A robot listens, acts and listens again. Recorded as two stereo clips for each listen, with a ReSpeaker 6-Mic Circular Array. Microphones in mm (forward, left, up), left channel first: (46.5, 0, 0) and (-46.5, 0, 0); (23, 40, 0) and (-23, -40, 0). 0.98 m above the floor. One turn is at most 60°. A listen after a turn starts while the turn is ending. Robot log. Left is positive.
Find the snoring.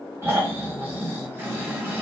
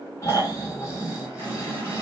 note: The snoring: 115° left.
cmd yaw +60
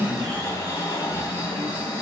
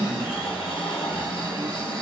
note: The snoring is now 55° left.
cmd yaw +55
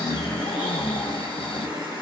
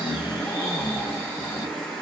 end: Found it: snoring, straight ahead.